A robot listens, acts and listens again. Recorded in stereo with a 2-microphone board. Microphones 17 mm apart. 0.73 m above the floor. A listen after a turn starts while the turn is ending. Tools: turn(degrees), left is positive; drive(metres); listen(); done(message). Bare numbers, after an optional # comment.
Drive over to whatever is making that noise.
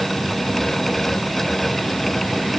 listen()
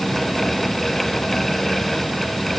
listen()
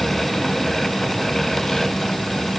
done("I can't make out anything to turn to.")